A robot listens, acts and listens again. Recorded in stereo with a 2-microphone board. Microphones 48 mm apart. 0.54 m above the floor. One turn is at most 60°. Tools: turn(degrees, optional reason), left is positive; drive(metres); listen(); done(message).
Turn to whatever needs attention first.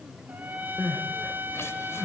turn(degrees=60, reason="The crying: about 65° left or 115° left.")
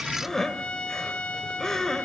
turn(degrees=10, reason="So it is at 10° left.")
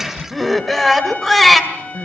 done("Facing the crying.")